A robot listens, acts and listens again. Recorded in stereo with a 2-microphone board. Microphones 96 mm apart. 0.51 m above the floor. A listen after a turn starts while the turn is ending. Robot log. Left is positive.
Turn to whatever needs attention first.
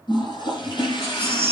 note: The baby crying: about 30° right or 150° right.
cmd yaw -30
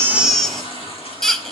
end: Found it: a baby crying, straight ahead.